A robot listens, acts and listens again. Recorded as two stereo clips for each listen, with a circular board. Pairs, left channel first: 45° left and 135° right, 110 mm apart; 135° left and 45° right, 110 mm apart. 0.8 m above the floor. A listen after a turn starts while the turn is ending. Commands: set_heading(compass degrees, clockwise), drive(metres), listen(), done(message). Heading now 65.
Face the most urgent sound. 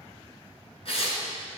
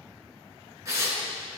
listen()
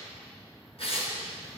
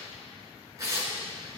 listen()
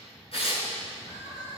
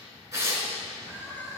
set_heading(350)
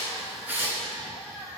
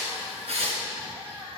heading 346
done("Facing the crying, 2 to 4 m away.")